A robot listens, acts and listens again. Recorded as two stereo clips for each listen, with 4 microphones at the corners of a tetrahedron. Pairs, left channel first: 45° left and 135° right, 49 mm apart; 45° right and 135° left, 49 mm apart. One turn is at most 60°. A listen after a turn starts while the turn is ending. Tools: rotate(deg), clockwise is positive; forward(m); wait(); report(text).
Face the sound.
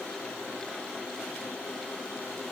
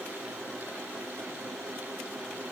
wait()
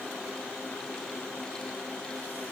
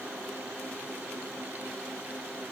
wait()
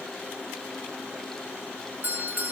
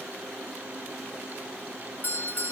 rotate(60)
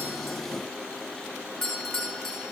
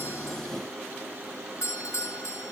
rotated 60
rotate(30)
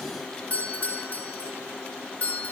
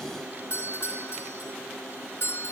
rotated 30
rotate(10)
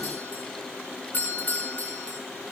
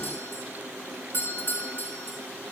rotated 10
report("Facing the doorbell, over 4 m away.")